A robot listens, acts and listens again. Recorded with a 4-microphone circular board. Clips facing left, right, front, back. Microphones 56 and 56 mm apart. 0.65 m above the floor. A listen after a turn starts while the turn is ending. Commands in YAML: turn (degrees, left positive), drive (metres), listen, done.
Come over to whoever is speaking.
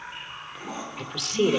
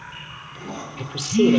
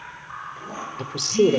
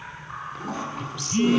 drive: 1.0
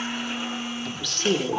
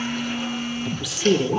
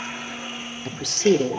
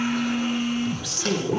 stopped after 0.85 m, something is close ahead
turn: -10
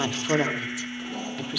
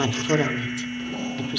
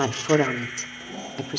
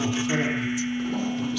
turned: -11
done: "I am next to the woman speaking."